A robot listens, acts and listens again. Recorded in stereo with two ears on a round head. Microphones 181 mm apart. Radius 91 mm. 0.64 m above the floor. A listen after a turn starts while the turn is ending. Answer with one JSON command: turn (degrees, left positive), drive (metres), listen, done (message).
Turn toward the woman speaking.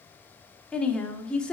{"turn": 30}
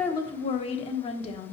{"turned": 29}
{"turn": 145}
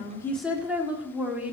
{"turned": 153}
{"turn": -10}
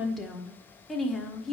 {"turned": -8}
{"done": "Facing the woman speaking, 1 to 2 m away."}